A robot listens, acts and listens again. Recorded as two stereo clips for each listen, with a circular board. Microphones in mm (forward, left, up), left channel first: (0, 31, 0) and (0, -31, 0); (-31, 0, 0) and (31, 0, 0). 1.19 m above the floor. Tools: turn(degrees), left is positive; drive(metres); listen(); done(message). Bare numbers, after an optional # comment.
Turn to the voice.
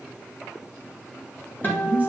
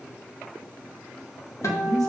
# The woman speaking: 25° right.
turn(-25)
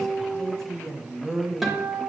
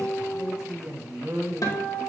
# The woman speaking is now 10° left.
turn(10)
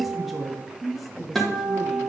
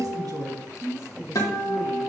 done("Found it: a woman speaking, straight ahead, 1 to 2 m away.")